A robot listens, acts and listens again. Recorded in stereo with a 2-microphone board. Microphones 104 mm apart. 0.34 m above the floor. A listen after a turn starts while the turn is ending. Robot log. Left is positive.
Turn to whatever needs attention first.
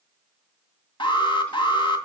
note: The alarm: about 50° left or 130° left.
cmd yaw +50
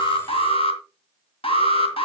note: So it is at 75° left.
cmd yaw +75
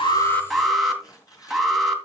end: Facing the alarm, 2 to 4 m away.